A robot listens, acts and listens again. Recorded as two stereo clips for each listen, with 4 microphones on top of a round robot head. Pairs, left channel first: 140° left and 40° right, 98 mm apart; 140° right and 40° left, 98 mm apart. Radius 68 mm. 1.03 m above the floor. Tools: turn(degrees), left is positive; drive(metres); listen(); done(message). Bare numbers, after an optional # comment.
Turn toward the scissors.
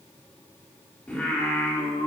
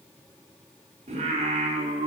listen()
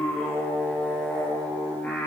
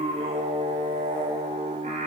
listen()
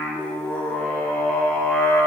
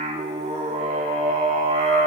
done("I can't make out scissors to turn to.")